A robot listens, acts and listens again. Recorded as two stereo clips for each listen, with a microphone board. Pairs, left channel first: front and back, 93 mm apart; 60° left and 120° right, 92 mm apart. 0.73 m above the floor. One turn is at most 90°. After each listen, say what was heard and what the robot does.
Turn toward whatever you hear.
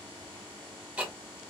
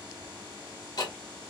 The ticking: 105° left. Turn 90° left.
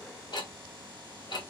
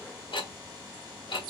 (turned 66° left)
The ticking is now 40° left. Turn 40° left.
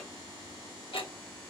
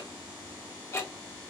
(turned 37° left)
Facing the ticking, 1 to 2 m away.